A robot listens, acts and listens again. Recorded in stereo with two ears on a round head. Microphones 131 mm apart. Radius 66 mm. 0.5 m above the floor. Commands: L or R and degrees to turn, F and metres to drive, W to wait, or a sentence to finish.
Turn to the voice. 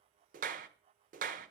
W
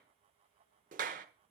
W
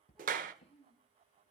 L30
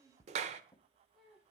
R20
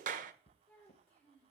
Facing the child speaking.